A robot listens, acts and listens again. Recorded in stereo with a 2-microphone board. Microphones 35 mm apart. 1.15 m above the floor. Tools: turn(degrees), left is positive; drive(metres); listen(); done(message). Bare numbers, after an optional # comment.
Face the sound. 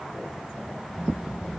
turn(30)
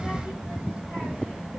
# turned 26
# So it is at 35° right.
turn(-35)
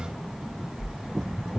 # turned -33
# The child speaking is now 15° right.
turn(-15)
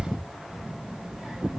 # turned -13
# The child speaking is now 10° right.
turn(-10)
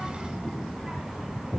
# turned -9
done("Facing the child speaking.")